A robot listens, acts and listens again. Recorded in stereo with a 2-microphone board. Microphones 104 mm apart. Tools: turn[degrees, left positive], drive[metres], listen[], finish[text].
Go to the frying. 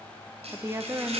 Action: turn[-90]
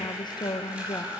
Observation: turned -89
Thought: So it is at 10° right.
Action: turn[-10]
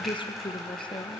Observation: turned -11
Action: drive[1.0]
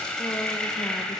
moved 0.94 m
Action: drive[1.0]
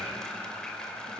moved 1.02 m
Action: drive[1.0]
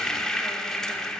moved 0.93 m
Action: drive[1.0]
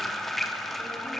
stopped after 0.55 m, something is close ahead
Action: finish[Arrived at the frying, straight ahead.]